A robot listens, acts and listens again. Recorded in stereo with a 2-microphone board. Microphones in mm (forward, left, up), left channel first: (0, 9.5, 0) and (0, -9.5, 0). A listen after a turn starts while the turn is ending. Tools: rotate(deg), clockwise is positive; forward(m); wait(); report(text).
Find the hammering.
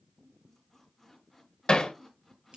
rotate(-50)
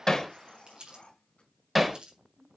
report("Found it: hammering, straight ahead, 1 to 2 m away.")